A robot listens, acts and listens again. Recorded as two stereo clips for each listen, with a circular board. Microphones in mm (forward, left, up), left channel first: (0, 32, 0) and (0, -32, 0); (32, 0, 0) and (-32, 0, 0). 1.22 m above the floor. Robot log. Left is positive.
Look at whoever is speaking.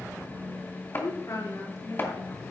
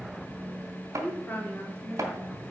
note: The woman speaking: 65° left.
cmd yaw +65
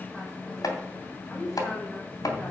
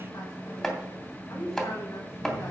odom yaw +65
note: The woman speaking is now 15° left.
cmd yaw +15
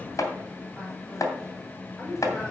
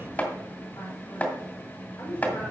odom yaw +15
end: Found it: a woman speaking, straight ahead.